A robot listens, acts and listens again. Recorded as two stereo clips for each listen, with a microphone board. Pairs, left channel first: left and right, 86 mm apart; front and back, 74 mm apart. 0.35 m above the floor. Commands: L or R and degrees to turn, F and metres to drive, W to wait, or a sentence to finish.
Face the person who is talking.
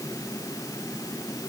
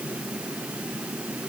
W
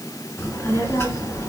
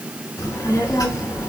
L35
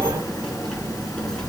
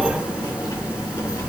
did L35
L10
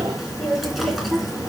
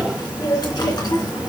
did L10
Found it: a child speaking, straight ahead, 2 to 4 m away.